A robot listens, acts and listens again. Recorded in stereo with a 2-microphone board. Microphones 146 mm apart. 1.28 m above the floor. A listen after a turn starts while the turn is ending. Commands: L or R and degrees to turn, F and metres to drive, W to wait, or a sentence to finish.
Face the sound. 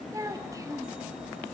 R20
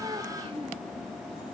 R140
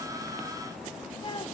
L35
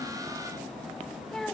Found it: a child speaking, straight ahead, 1 to 2 m away.